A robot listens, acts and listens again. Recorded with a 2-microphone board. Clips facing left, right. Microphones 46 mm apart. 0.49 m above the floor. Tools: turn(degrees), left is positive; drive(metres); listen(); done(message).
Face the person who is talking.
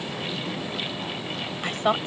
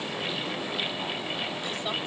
turn(degrees=60)
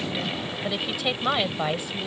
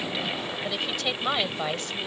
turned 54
turn(degrees=15)
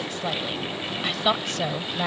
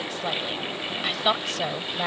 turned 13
done("Facing the woman speaking.")